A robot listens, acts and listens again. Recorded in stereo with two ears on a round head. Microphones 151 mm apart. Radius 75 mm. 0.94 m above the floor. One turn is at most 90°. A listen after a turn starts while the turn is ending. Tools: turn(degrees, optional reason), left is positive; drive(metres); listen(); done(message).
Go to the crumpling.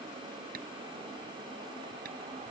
listen()
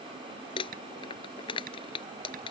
turn(degrees=30, reason="The crumpling: about 30° left or 150° left.")
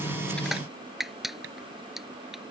drive(metres=1.0)
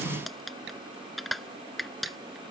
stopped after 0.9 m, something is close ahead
done("Something is in my way. I am facing the crumpling but have not reached it.")